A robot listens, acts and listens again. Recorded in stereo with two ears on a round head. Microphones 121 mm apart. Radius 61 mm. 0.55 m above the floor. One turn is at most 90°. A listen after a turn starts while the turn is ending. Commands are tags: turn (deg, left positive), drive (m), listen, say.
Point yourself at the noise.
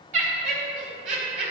<turn deg="-55"/>
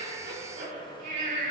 <turn deg="-60"/>
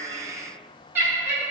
<turn deg="-15"/>
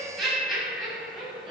<say>Facing the laughter.</say>